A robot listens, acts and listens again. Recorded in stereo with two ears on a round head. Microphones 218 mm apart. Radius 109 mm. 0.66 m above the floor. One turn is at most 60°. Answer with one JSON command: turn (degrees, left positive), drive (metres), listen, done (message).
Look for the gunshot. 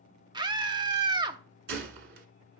{"turn": -50}
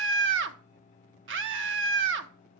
{"listen": true}
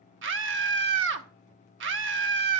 {"done": "I heard a gunshot, but can't make it out now. It was about straight ahead or 80° right."}